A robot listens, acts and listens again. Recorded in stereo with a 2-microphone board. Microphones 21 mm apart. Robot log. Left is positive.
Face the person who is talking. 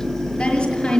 note: The woman speaking: about 45° left or 135° left.
cmd yaw +45
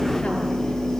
cmd idle
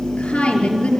note: So it is at 90° left.
cmd yaw +90
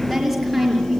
end: Found it: a woman speaking, straight ahead, over 4 m away.